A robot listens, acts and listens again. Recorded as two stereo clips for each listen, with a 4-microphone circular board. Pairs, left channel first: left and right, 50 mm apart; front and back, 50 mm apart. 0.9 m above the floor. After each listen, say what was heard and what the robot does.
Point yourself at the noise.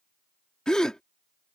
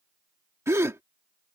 The gasp: 165° left. Turn 165° left.
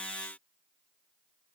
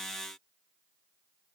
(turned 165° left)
I heard a gasp from this way, but can't make it out now.